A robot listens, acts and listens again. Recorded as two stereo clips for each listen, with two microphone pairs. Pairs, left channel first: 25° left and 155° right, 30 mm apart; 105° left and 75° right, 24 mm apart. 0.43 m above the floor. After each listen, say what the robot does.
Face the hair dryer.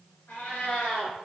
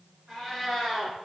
Keep listening.
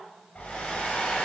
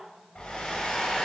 Turn 65° left.
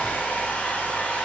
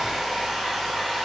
Facing the hair dryer, under 1 m away.